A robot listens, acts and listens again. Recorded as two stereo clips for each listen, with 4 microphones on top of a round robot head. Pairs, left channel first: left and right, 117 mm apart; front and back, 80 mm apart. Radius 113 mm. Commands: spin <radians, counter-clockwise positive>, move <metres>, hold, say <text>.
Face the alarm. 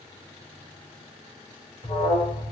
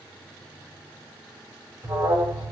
spin 2.27
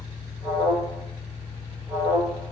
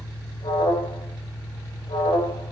spin -0.35
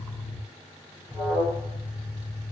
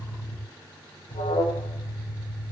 say Facing the alarm, over 4 m away.